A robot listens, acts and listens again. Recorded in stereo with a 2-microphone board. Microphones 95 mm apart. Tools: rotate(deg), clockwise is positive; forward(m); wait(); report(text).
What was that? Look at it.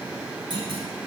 rotate(55)
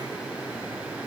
wait()
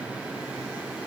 report("I heard a clunk, but can't make it out now. It was about straight ahead or 70° right.")